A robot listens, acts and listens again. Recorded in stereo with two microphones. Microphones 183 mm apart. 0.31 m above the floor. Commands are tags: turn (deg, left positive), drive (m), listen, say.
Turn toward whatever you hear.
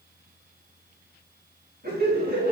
<turn deg="-65"/>
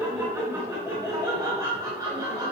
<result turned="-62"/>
<turn deg="-20"/>
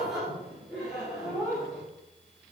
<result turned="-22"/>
<say>Found it: laughter, straight ahead.</say>